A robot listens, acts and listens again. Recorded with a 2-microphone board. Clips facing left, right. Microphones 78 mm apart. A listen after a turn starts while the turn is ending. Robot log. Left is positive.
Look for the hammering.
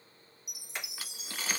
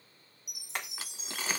note: The hammering: about 60° right or 120° right.
cmd yaw -60
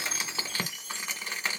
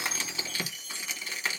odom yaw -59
cmd idle
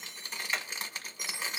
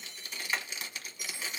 end: Found it: hammering, straight ahead, 1 to 2 m away.